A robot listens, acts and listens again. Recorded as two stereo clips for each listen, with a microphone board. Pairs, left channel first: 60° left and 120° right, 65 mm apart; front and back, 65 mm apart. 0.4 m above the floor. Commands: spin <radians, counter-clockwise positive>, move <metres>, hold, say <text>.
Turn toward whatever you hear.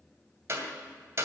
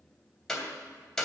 spin -1.48
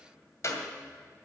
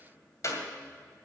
spin 0.44
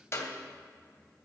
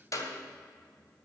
spin 0.26
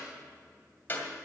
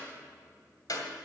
say Found it: a clap, straight ahead, 2 to 4 m away.